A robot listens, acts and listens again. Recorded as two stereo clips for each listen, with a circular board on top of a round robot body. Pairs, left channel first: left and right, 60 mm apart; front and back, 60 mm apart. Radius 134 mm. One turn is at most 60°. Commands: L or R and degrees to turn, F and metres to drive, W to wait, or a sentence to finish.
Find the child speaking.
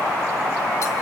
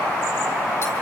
W
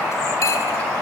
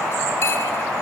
W
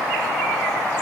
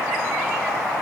I can't make out a child speaking to turn to.